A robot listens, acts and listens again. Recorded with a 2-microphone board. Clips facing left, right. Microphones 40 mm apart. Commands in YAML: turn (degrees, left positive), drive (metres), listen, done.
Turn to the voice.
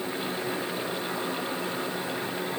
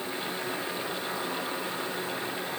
listen: true
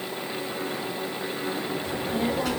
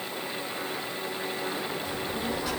turn: 90
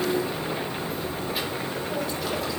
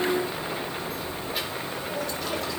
done: "Found it: a child speaking, straight ahead."